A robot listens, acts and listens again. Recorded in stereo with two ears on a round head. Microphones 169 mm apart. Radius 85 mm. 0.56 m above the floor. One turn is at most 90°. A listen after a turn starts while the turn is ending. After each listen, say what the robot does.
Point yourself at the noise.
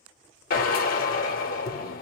Turn 50° left.
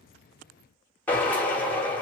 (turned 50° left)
Turn 10° left.
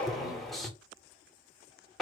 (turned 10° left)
Found it: a drill, straight ahead.